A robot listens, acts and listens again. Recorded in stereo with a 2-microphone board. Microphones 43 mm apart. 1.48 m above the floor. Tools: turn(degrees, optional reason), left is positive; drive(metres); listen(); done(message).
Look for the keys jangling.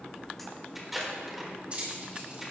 turn(degrees=-30, reason="The keys jangling: about 30° right or 150° right.")
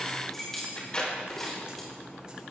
done("Found it: keys jangling, straight ahead.")